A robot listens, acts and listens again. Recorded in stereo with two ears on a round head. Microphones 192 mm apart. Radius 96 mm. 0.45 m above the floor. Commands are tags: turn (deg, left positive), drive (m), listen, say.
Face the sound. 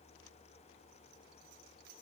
<listen/>
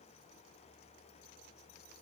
<listen/>
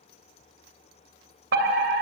<turn deg="-55"/>
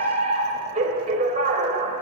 <turn deg="-45"/>
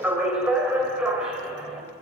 <say>Found it: a fire alarm, straight ahead, 2 to 4 m away.</say>